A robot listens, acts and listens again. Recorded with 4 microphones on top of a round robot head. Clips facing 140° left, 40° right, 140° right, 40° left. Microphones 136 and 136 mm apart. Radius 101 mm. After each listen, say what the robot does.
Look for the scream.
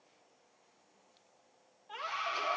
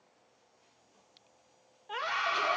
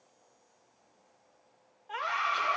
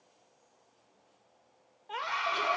Turn 20° right.
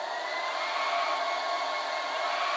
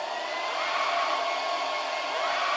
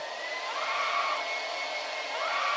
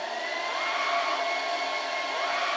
Keep listening.
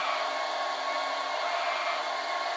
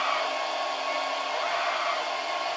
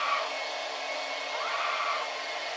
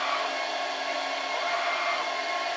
Keep listening.
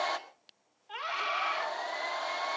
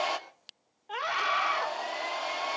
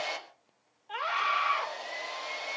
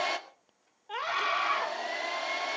Facing the scream.